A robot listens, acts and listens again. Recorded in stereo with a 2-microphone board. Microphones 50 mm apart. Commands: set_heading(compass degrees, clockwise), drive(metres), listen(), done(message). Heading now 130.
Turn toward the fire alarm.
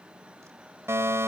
set_heading(190)
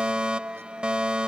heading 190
set_heading(210)
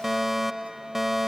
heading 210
done("Found it: a fire alarm, straight ahead.")